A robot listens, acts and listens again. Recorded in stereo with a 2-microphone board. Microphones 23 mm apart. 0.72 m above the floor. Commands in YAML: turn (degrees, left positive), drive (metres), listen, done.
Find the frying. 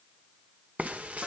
turn: -90
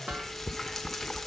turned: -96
turn: 10
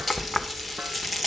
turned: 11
done: "Facing the frying, 1 to 2 m away."